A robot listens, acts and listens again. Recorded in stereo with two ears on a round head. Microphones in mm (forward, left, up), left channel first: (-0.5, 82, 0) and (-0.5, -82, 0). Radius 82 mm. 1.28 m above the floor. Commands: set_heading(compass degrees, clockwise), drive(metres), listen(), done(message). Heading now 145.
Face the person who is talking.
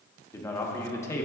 set_heading(130)
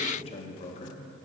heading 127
set_heading(342)
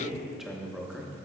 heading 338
done("Found it: a man speaking, straight ahead, under 1 m away.")